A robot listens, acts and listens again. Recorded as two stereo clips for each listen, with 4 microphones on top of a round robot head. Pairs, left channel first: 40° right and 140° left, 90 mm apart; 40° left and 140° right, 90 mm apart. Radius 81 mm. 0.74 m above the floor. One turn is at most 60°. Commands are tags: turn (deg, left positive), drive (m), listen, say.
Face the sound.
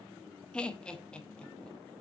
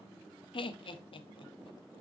<turn deg="35"/>
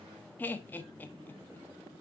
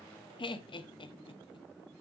<turn deg="25"/>
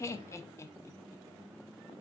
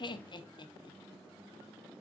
<turn deg="15"/>
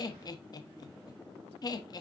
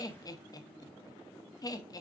<say>Found it: laughter, straight ahead.</say>